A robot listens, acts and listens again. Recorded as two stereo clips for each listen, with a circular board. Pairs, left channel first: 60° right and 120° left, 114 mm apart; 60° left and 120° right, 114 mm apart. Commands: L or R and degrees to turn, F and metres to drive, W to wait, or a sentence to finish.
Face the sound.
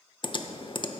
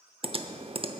R95
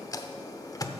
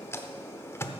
Facing the typing on a keyboard.